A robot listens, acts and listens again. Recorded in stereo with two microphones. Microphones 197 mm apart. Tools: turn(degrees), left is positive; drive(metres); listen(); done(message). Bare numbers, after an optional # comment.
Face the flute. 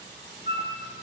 # The flute: about 60° left or 120° left.
turn(60)
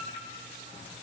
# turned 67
listen()
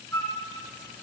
# So it is at 15° left.
turn(15)
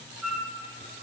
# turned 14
done("Found it: a flute, straight ahead.")